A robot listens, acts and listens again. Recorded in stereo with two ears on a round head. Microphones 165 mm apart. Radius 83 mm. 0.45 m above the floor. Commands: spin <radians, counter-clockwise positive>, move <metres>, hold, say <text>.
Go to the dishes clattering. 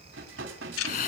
spin -1.57
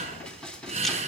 move 1.0
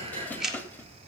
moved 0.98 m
spin 0.17
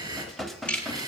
move 1.0
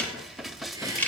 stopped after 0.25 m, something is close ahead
say I am next to the dishes clattering.